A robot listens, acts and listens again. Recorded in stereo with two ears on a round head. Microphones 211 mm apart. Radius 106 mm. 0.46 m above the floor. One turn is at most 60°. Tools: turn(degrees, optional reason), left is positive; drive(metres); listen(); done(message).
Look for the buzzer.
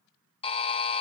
turn(degrees=25, reason="The buzzer: about 25° left or 155° left.")
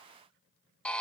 done("Facing the buzzer.")